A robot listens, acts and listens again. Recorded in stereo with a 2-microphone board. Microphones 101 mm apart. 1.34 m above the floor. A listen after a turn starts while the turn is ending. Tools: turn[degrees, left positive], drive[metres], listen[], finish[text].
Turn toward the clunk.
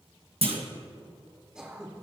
Thought: The clunk: about 65° right or 115° right.
Action: turn[-65]
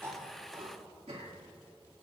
Action: listen[]
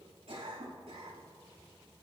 Action: finish[I heard a clunk, but can't make it out now. It was about straight ahead or 50° right.]